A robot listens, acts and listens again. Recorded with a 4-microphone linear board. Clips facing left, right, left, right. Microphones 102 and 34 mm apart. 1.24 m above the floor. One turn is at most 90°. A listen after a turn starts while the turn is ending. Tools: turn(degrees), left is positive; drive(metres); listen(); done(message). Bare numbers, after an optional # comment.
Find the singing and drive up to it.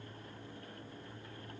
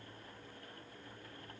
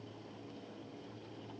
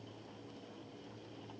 listen()
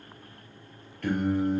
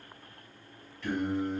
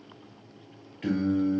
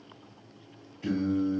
# The singing: about 70° left or 110° left.
turn(70)
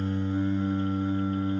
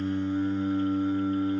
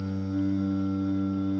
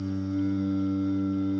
drive(1.0)
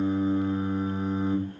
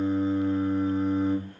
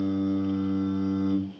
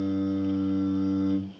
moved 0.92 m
# The singing is now 10° left.
turn(10)
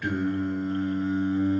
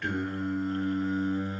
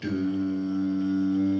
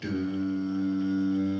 drive(1.0)
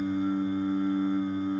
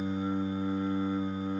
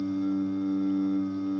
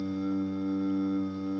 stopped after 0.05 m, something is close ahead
# The singing is now 15° right.
turn(-15)
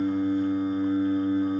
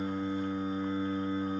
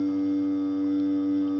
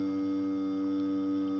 done("I am next to the singing.")